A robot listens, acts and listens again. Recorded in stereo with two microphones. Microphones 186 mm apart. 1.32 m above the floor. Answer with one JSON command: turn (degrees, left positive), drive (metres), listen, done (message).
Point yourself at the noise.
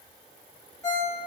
{"turn": 15}
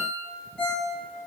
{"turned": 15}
{"done": "Found it: a ringtone, straight ahead, 1 to 2 m away."}